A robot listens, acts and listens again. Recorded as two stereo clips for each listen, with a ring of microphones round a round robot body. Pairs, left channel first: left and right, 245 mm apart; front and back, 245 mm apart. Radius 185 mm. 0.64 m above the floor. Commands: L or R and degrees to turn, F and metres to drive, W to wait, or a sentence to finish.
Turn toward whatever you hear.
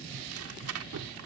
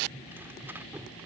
R100
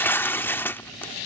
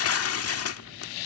L10
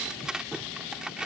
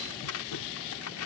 Found it: tearing paper, straight ahead.